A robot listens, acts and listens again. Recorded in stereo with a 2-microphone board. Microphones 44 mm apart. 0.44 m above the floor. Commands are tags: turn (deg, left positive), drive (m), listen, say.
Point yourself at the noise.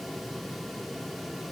<listen/>
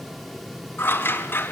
<turn deg="50"/>
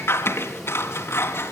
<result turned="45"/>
<turn deg="80"/>
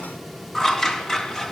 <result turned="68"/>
<turn deg="15"/>
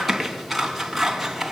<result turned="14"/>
<say>Facing the scissors, 2 to 4 m away.</say>